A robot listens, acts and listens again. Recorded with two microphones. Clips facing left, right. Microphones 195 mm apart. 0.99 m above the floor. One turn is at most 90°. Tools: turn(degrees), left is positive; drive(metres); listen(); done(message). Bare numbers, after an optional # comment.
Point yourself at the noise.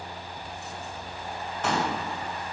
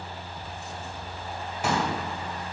turn(-30)
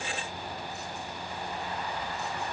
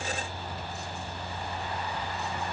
listen()
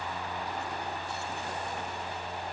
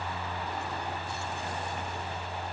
done("I heard a pop, but can't make it out now. It was about 20° left or 140° right.")